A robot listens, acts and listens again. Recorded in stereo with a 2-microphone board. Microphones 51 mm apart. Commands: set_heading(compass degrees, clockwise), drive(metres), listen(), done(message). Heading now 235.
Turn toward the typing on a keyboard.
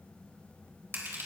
listen()
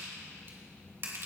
listen()
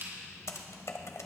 set_heading(145)
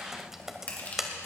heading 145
set_heading(155)
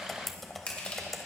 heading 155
done("Found it: typing on a keyboard, straight ahead.")